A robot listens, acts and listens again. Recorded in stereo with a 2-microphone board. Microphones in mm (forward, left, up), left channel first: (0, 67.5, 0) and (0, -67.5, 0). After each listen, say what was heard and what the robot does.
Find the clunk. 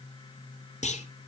The clunk: about 65° left or 115° left. Turn 65° left.
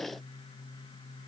Keep listening.
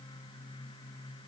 I heard a clunk, but can't make it out now. It was about straight ahead or 50° left.